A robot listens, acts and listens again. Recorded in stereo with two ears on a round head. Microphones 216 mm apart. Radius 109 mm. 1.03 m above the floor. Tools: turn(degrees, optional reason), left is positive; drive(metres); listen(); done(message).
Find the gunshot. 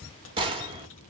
turn(degrees=-20, reason="The gunshot: about 20° right or 160° right.")
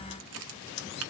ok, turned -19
listen()
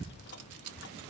done("I heard a gunshot, but can't make it out now. It was about straight ahead or 140° right.")